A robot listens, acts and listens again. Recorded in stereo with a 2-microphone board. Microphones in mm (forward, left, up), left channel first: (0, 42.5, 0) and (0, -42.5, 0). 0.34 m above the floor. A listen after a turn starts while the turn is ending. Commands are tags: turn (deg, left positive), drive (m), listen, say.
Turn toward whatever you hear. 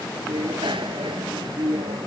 <turn deg="-90"/>
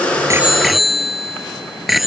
<say>Found it: a bicycle bell, straight ahead.</say>